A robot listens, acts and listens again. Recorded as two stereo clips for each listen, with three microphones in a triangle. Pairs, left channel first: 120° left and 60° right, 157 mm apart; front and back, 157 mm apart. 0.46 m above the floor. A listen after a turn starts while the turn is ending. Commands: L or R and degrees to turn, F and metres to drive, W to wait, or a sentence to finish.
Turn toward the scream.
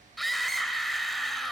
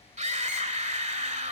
R150
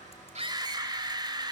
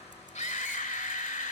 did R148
Facing the scream, 1 to 2 m away.